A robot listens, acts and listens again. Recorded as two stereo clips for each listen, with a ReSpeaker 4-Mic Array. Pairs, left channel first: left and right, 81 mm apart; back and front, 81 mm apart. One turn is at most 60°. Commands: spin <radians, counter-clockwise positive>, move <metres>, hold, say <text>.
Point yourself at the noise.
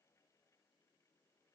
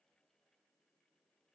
hold
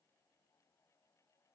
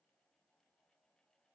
hold
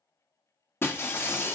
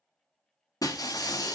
spin 1.05
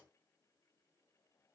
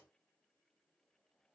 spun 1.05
spin 1.05
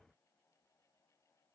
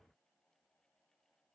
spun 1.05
spin 0.52
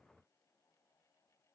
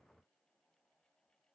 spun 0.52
say Facing where the breaking glass came from. I can't hear it now.